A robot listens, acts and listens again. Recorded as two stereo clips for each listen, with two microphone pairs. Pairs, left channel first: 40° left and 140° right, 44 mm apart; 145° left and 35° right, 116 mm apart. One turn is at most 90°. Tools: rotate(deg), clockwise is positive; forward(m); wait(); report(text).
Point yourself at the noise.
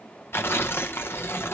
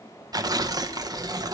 rotate(-15)
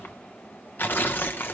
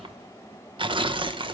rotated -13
report("Facing the tearing paper, under 1 m away.")